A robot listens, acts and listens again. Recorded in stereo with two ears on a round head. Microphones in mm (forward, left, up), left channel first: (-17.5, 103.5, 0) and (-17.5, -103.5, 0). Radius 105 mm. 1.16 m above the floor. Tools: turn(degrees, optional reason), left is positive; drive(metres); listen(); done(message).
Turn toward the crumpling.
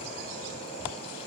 listen()
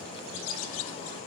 listen()
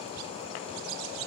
done("I can't make out crumpling.")